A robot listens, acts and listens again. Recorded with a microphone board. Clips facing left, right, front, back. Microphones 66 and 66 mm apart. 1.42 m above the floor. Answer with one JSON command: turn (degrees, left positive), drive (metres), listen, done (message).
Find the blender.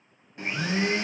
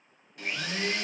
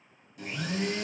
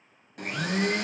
{"turn": 155}
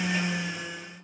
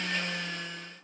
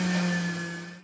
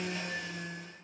{"turn": 10}
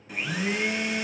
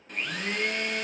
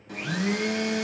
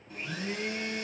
{"done": "Found it: a blender, straight ahead, under 1 m away."}